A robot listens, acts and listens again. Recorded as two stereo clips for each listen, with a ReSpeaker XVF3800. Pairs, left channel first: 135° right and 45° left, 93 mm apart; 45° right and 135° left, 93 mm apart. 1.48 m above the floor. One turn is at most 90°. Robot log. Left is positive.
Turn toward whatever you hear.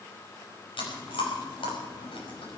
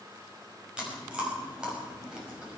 note: The chewing: 145° right.
cmd yaw -90
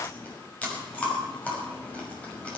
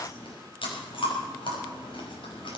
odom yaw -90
note: The chewing is now 60° right.
cmd yaw -60
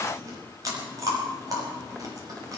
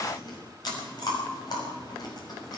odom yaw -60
end: Facing the chewing, over 4 m away.